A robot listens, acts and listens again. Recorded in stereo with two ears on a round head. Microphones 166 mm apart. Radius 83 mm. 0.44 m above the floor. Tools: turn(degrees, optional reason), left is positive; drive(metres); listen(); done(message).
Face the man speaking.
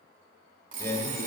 turn(degrees=30)
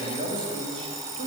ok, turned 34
turn(degrees=-35, reason="So it is at 35° right.")
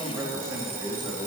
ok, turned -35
turn(degrees=-20, reason="The man speaking is now 20° right.")
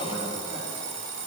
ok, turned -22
done("Facing the man speaking.")